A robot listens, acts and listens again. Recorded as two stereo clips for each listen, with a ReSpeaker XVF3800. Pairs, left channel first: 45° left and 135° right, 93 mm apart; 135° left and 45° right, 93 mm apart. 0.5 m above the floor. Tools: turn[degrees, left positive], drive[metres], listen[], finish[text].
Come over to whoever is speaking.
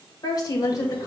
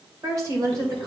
Action: drive[1.0]
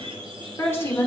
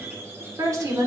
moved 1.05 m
Thought: The woman speaking is now 10° right.
Action: turn[-10]
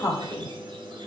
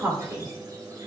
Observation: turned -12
Action: drive[1.0]
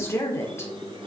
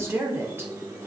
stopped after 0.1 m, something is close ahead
Action: finish[I am next to the woman speaking.]